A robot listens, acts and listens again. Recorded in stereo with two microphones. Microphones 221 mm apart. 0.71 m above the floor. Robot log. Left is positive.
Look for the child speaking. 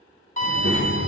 note: The child speaking: about 70° left or 110° left.
cmd yaw +70
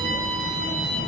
cmd idle
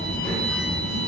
note: So it is at 10° left.
cmd yaw +10
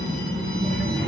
end: Found it: a child speaking, straight ahead.